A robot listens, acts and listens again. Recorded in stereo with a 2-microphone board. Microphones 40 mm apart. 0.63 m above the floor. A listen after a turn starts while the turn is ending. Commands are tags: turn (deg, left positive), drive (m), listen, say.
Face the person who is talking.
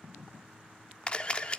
<listen/>
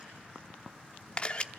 <listen/>
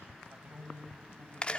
<turn deg="-45"/>
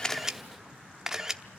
<listen/>
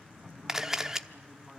<say>Facing the man speaking, over 4 m away.</say>